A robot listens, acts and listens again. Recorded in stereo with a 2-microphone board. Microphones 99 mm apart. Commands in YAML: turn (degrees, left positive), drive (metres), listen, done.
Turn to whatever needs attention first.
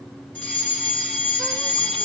turn: 30
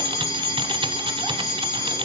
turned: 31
turn: 135
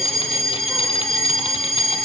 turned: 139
done: "Found it: a fire alarm, straight ahead."